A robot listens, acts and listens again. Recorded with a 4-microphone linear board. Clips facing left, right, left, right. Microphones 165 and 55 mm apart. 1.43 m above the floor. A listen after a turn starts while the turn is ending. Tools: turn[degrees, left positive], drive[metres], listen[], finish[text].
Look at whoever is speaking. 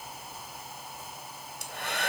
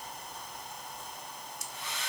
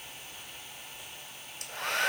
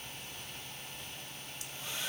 Action: listen[]
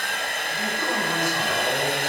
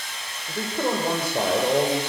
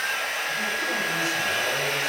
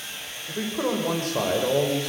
Thought: The man speaking: about 60° right or 120° right.
Action: turn[-60]
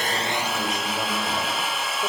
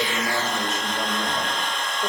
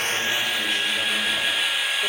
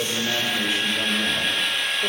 Action: listen[]
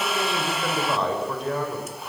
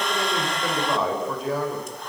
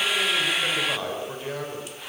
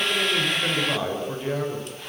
Action: finish[Found it: a man speaking, straight ahead, over 4 m away.]